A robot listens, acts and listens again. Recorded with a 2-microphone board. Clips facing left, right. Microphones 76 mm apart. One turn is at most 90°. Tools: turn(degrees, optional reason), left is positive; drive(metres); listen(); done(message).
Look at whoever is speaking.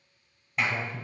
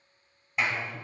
turn(degrees=50, reason="The man speaking: about 50° left or 130° left.")
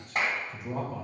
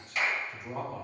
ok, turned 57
done("Facing the man speaking, 2 to 4 m away.")